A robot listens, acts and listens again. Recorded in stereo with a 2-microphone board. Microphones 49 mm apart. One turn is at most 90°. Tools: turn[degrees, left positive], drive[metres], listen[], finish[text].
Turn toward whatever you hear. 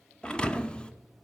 Thought: The thud: about 20° left or 160° left.
Action: turn[20]
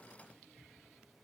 Action: listen[]
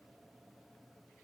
Action: finish[I heard a thud, but can't make it out now. It was about straight ahead or 140° left.]